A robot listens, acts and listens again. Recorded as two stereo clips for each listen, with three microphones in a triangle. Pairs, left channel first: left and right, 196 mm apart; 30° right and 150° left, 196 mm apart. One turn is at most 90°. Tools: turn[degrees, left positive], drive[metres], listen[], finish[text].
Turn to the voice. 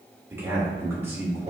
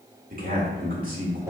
Thought: The man speaking: 165° right.
Action: turn[-90]
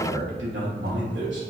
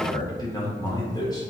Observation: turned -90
Thought: The man speaking is now 100° right.
Action: turn[-90]
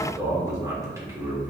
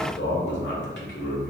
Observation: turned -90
Thought: The man speaking is now 15° right.
Action: turn[-15]
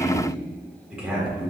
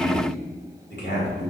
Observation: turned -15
Action: finish[Found it: a man speaking, straight ahead, 1 to 2 m away.]